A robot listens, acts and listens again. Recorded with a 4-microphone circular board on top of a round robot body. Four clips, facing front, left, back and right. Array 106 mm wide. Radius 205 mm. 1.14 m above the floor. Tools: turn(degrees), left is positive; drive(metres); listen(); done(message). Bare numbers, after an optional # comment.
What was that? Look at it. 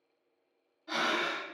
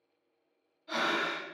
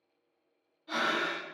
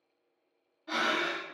# The breathing: 75° right.
turn(-75)
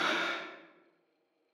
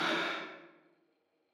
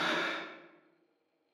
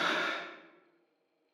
done("Facing the breathing.")